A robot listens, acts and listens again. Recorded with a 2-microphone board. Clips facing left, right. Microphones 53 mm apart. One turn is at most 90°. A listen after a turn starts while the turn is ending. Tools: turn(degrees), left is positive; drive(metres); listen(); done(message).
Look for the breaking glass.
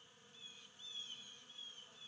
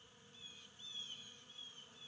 listen()
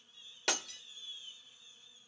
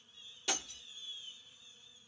turn(degrees=65)
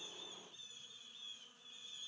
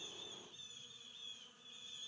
listen()
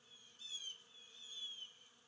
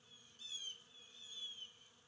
done("I heard breaking glass, but can't make it out now. It was about straight ahead or 50° left.")